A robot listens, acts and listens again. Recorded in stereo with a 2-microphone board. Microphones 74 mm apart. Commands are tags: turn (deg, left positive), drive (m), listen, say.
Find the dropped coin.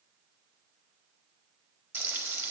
<listen/>
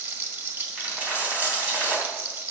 <turn deg="-25"/>
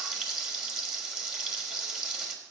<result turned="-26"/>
<listen/>
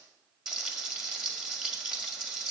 <say>I heard a dropped coin, but can't make it out now. It was about straight ahead or 130° right.</say>